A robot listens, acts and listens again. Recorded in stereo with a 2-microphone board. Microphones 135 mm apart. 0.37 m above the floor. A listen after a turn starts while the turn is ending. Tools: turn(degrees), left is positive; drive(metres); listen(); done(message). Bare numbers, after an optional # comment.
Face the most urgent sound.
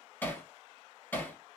listen()
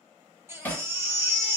# The baby crying: about 15° right or 165° right.
turn(-15)
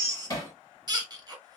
# So it is at 150° right.
turn(-150)
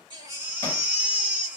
# The baby crying is now 15° right.
turn(-15)
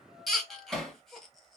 done("Found it: a baby crying, straight ahead, 1 to 2 m away.")